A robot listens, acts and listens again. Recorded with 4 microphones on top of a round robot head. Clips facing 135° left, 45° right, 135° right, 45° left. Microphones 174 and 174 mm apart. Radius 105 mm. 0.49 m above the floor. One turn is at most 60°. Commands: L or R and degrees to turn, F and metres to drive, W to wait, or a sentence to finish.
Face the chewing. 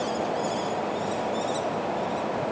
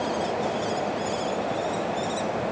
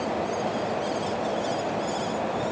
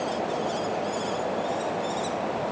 W
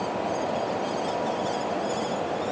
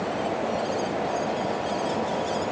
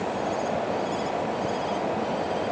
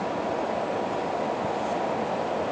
W
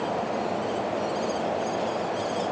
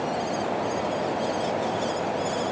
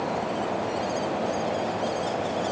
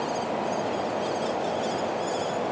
I can't make out chewing to turn to.